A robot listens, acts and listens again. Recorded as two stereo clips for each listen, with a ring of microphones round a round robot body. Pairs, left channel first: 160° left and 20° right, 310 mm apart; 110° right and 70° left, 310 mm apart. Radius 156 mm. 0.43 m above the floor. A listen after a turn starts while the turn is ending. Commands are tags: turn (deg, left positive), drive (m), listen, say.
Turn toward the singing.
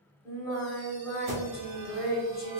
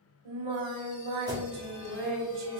<turn deg="75"/>
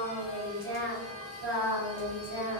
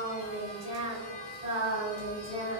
<say>Facing the singing, 1 to 2 m away.</say>